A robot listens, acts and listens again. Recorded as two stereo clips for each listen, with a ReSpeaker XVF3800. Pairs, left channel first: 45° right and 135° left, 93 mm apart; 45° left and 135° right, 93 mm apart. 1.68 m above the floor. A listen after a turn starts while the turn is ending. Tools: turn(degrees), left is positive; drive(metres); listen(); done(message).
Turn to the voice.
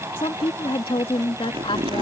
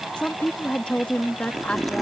turn(degrees=-30)
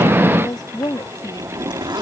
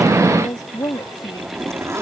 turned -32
done("Found it: a woman speaking, straight ahead.")